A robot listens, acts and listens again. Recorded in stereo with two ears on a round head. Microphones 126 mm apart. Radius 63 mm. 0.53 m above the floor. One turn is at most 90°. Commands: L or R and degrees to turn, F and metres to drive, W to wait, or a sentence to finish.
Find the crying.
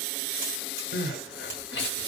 L90
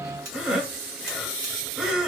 Facing the crying, under 1 m away.